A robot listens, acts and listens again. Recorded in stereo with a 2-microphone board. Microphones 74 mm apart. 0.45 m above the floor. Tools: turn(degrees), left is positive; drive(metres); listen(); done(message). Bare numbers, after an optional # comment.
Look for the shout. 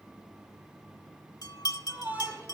# The shout: about 20° right or 160° right.
turn(-20)
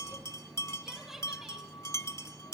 done("Found it: a shout, straight ahead.")